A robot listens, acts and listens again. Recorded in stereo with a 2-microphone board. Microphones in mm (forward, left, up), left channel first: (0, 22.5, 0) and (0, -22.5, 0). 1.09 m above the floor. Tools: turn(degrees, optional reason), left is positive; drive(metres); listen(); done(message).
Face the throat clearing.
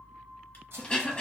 turn(degrees=20, reason="The throat clearing: about 20° left or 160° left.")
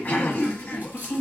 turn(degrees=140, reason="So it is at 140° left.")
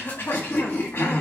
turn(degrees=55, reason="The throat clearing is now 55° left.")
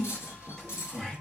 turn(degrees=10, reason="The throat clearing is now 10° left.")
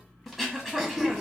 done("Facing the throat clearing.")